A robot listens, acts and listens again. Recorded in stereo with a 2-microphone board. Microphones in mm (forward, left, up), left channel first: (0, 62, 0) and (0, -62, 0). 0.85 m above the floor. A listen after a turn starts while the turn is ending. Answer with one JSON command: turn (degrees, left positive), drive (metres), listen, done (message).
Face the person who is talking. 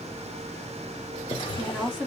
{"turn": -30}
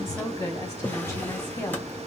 {"turn": 25}
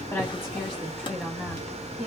{"done": "Found it: a woman speaking, straight ahead."}